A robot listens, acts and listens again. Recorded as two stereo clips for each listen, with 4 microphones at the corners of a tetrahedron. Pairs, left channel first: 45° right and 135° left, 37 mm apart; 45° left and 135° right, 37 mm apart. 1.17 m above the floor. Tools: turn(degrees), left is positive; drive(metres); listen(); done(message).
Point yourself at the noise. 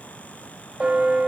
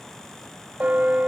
turn(degrees=180)
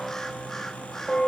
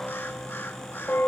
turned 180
turn(degrees=35)
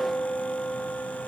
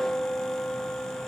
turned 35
done("Found it: a bell, straight ahead.")